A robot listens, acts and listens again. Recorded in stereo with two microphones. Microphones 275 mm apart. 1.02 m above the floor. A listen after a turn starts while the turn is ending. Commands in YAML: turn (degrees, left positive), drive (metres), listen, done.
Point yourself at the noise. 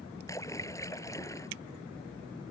turn: 30
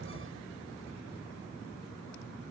listen: true
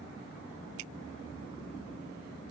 done: "I heard a splash, but can't make it out now. It was about 20° right or 140° left."